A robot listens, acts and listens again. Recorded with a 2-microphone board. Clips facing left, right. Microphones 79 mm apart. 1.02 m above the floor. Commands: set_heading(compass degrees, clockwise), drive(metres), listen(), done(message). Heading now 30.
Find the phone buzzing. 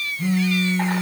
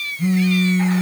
set_heading(0)
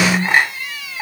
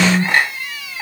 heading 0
set_heading(30)
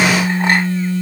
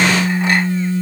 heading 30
done("Facing the phone buzzing.")